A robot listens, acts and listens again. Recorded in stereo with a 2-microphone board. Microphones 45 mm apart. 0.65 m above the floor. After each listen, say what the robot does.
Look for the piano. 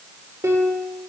Turn 90° right.
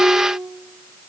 Facing the piano, over 4 m away.